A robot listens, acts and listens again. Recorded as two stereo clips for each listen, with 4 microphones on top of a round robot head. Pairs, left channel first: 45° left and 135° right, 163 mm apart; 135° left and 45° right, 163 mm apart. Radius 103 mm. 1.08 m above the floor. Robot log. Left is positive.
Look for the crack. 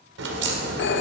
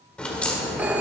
note: The crack: 140° right.
cmd yaw -140
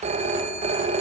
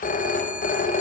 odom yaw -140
end: Facing where the crack came from. I can't hear it now.